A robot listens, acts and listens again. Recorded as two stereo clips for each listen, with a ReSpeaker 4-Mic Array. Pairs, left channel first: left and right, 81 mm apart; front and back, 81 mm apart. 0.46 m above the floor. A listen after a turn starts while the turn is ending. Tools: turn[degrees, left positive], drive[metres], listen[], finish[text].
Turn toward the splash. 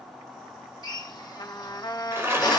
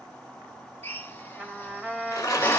Thought: The splash: 35° right.
Action: turn[-35]
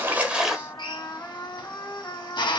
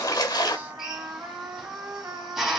Action: finish[Found it: a splash, straight ahead.]